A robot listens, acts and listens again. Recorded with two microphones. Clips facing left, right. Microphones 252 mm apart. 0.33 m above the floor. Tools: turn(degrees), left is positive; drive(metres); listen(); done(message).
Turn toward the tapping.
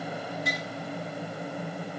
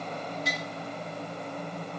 listen()
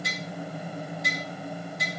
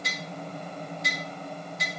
turn(degrees=55)
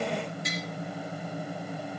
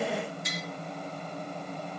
turn(degrees=65)
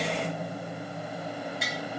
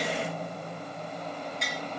done("Facing the tapping, over 4 m away.")